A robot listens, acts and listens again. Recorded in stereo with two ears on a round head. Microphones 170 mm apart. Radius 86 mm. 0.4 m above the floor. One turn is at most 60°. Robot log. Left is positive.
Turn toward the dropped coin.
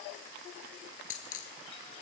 note: The dropped coin: about 40° left or 140° left.
cmd yaw +40
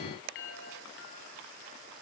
cmd idle
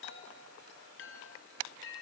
end: I heard a dropped coin, but can't make it out now. It was about straight ahead or 100° left.